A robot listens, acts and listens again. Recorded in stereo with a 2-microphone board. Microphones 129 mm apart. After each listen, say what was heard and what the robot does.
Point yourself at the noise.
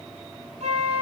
The flute: about 60° right or 120° right. Turn 60° right.
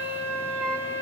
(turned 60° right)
So it is at 15° right. Turn 15° right.
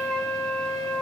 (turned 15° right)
Found it: a flute, straight ahead.